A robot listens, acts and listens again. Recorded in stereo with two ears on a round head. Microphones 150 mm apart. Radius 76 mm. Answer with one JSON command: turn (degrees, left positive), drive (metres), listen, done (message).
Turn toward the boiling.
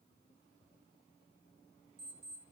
{"listen": true}
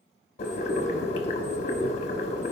{"turn": 40}
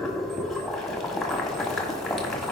{"done": "Facing the boiling."}